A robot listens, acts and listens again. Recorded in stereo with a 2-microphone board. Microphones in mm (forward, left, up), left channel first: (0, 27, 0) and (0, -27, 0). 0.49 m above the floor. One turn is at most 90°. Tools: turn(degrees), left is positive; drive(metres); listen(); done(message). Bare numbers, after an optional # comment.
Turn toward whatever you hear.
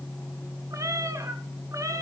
turn(-90)
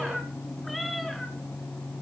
done("Facing the cat meowing, 2 to 4 m away.")